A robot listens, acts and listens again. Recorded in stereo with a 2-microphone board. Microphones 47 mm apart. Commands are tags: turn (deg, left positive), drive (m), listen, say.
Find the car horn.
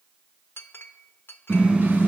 <turn deg="-30"/>
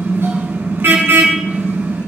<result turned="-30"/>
<turn deg="-115"/>
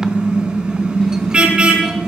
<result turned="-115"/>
<turn deg="-25"/>
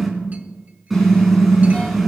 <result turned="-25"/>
<say>Facing the car horn, 2 to 4 m away.</say>